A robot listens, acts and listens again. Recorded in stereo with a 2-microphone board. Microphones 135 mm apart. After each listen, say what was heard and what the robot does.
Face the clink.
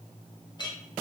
The clink: about 35° left or 145° left. Turn 35° left.
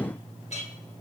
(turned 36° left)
So it is at 105° left. Turn 105° left.
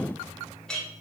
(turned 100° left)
Facing the clink, 1 to 2 m away.